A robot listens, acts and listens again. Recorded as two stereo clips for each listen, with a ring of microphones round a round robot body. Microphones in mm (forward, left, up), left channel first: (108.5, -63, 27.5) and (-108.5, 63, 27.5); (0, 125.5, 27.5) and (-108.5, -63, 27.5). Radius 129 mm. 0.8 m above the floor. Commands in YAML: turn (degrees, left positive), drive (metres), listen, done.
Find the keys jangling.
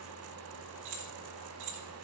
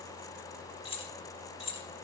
turn: 130
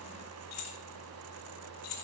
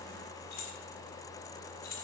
done: "Facing the keys jangling, 1 to 2 m away."